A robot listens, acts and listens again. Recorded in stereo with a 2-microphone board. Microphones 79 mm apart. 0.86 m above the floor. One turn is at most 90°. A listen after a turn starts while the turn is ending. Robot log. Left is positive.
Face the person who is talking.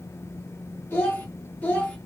note: The child speaking: about 20° left or 160° left.
cmd yaw +20
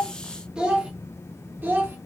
note: So it is at 25° right.
cmd yaw -25
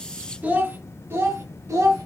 note: The child speaking is now 45° right.
cmd yaw -45
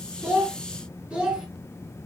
note: The child speaking is now 15° right.
cmd yaw -15
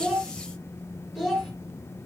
end: Facing the child speaking, 1 to 2 m away.